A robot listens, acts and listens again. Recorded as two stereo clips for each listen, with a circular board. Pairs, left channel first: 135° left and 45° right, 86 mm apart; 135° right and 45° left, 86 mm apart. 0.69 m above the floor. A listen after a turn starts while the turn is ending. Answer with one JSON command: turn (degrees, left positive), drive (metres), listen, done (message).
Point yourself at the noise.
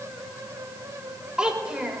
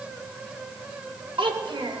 {"turn": 35}
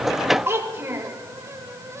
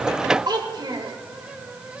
{"turn": 15}
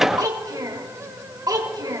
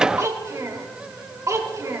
{"done": "Facing the child speaking, 1 to 2 m away."}